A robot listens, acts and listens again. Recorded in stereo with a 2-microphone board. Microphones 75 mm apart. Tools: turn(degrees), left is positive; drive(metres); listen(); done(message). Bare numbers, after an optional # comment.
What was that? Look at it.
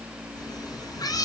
# The cat meowing: about 60° left or 120° left.
turn(60)
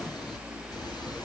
# So it is at 70° left.
turn(70)
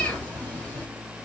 # The cat meowing is now 25° left.
turn(25)
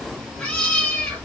# The cat meowing is now 15° left.
turn(15)
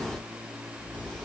listen()
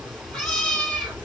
# The cat meowing is now 10° left.
turn(10)
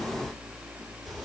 done("Facing the cat meowing.")